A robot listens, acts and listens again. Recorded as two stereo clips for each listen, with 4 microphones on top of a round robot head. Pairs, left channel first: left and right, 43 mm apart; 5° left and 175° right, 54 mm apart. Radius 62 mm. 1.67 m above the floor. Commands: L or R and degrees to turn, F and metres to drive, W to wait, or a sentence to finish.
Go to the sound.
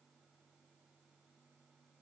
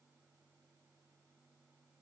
W
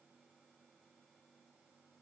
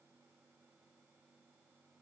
W
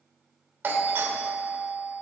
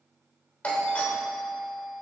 R60
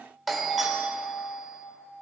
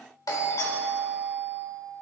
F1.0
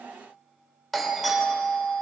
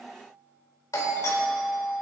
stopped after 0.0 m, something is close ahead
Something is in my way. I am facing the doorbell but have not reached it.